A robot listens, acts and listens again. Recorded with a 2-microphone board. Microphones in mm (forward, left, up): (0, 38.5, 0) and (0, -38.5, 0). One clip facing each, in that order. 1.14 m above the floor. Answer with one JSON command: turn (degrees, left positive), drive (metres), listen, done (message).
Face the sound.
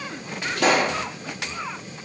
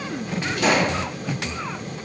{"turn": 65}
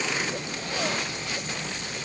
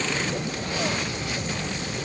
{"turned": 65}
{"listen": true}
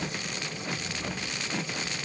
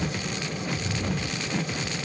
{"done": "I heard a pop, but can't make it out now. It was about straight ahead or 50° left."}